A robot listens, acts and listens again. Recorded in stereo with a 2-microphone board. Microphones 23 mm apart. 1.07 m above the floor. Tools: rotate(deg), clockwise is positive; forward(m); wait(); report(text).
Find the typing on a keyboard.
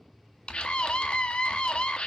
rotate(-50)
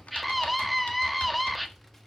rotate(-80)
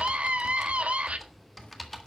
report("Facing the typing on a keyboard.")